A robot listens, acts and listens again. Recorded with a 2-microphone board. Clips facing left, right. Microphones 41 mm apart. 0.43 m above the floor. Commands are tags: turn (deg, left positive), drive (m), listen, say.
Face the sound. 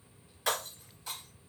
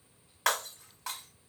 <turn deg="-75"/>
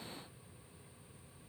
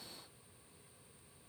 <listen/>
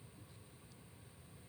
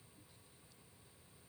<say>I heard breaking glass, but can't make it out now. It was about straight ahead or 30° right.</say>